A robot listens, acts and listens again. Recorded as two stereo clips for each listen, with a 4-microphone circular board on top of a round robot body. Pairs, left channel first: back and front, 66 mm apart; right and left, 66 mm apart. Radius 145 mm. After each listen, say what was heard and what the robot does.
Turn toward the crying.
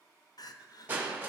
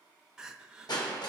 The crying: 175° left. Turn 175° left.
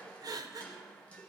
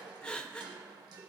The crying is now 10° right. Turn 10° right.
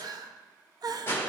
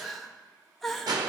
Facing the crying.